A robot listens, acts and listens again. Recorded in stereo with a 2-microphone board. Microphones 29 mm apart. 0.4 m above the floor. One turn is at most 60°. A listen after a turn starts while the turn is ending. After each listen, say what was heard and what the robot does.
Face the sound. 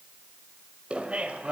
The laughter: about 50° right or 130° right. Turn 50° right.
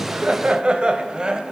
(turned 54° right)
So it is at 30° right. Turn 30° right.
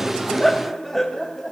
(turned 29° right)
The laughter is now 10° left. Turn 10° left.
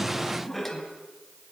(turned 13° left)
Facing the laughter.